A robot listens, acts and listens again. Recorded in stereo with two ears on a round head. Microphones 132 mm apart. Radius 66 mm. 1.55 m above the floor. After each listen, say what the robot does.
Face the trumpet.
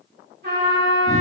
Turn 60° right.
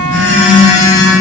Keep listening.
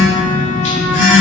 Keep listening.
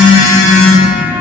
I heard a trumpet, but can't make it out now. It was about straight ahead or 60° right.